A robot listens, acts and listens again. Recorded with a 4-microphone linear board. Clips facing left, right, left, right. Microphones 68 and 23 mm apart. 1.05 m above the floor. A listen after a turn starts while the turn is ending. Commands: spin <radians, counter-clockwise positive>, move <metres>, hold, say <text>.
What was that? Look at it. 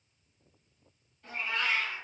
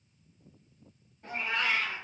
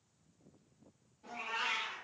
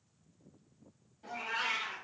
spin -0.44
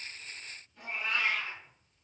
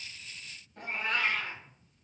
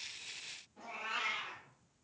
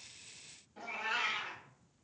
spin -2.18
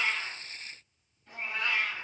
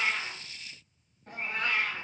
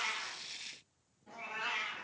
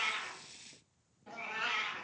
spin -0.87
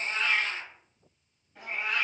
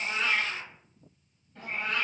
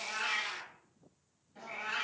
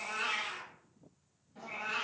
spin 0.17
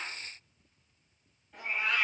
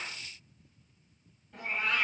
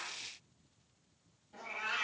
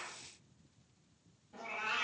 say Facing the cat meowing, 1 to 2 m away.